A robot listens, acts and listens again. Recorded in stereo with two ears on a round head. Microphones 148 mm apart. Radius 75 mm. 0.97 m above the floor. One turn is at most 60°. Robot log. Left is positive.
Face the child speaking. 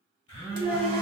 cmd yaw +30
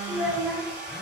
note: So it is at 30° right.
cmd yaw -30
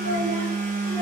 cmd idle
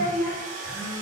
note: The child speaking is now 10° left.
cmd yaw +10
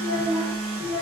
end: Facing the child speaking, over 4 m away.